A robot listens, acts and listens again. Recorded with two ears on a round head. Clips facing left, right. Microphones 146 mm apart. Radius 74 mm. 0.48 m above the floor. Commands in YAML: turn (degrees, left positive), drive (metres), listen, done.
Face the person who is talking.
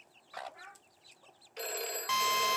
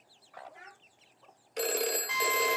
turn: -20
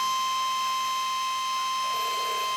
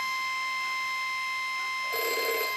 listen: true
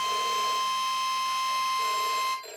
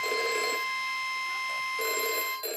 listen: true
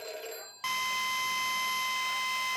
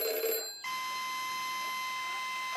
done: "I heard a child speaking, but can't make it out now. It was about straight ahead or 140° right."